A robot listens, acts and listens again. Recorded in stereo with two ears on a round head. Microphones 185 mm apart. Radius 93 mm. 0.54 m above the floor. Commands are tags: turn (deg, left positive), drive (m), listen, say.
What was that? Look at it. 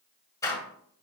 <turn deg="15"/>
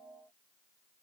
<listen/>
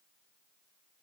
<say>I heard a door slam, but can't make it out now. It was about straight ahead or 150° left.</say>